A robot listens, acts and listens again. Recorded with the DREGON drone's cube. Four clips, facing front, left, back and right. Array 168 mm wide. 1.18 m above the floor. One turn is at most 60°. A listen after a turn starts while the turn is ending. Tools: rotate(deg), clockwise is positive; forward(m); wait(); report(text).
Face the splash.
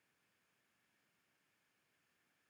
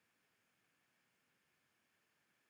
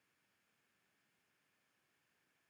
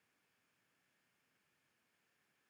wait()
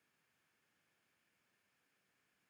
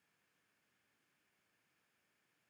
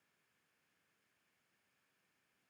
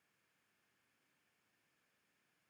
wait()
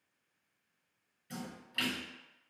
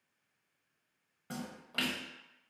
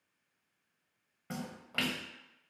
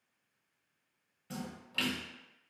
rotate(-60)
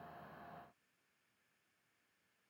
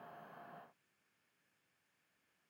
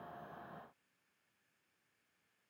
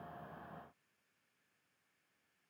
rotate(-60)
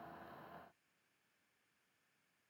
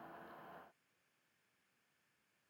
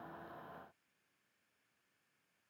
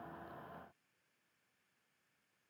rotate(-35)
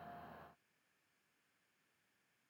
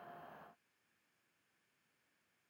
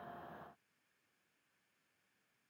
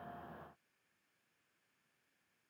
report("I heard a splash from this way, but can't make it out now.")